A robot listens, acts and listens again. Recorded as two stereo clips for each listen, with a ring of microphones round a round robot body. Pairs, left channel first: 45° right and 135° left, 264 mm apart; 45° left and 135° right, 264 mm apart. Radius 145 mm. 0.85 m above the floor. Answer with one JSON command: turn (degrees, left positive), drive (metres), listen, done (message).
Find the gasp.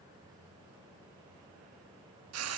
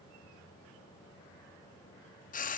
{"listen": true}
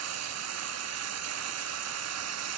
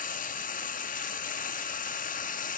{"listen": true}
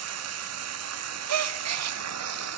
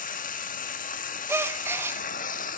{"turn": 145}
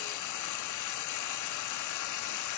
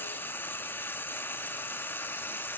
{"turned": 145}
{"done": "I heard a gasp from this way, but can't make it out now."}